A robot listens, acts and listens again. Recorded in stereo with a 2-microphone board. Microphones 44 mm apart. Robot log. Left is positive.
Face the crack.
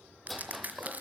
note: The crack: about 40° right or 140° right.
cmd yaw -40
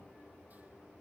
cmd idle
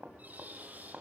end: I heard a crack, but can't make it out now. It was about straight ahead or 100° right.